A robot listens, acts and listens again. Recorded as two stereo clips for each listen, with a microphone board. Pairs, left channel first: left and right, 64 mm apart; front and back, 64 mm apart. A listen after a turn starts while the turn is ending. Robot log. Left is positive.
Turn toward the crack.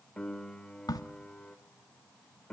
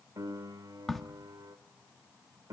note: The crack: 90° left.
cmd yaw +90
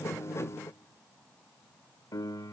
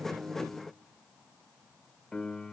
end: Facing where the crack came from. I can't hear it now.